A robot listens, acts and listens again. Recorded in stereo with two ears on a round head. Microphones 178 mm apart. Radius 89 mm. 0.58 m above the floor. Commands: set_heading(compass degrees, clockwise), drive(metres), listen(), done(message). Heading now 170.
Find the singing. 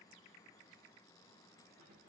listen()
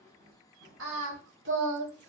set_heading(230)
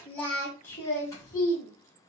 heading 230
set_heading(210)
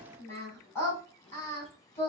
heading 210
set_heading(200)
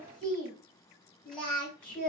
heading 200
done("Facing the singing, 2 to 4 m away.")